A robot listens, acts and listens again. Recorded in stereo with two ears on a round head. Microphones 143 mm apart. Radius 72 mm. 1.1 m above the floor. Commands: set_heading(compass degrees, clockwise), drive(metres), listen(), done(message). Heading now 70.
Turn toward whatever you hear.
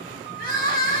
set_heading(10)
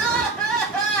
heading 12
done("Facing the crying, 1 to 2 m away.")